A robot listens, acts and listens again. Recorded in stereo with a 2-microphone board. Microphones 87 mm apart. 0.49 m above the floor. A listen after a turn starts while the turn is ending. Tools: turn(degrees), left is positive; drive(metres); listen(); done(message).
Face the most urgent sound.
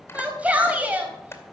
turn(degrees=-15)
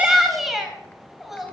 done("Facing the shout, 2 to 4 m away.")